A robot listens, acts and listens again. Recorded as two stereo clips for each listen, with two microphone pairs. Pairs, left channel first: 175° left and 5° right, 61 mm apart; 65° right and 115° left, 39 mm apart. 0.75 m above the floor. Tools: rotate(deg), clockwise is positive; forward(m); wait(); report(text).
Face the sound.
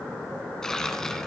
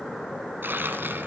rotate(-95)
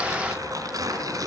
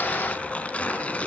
rotate(10)
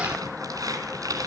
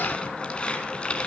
report("Facing the tearing paper, 2 to 4 m away.")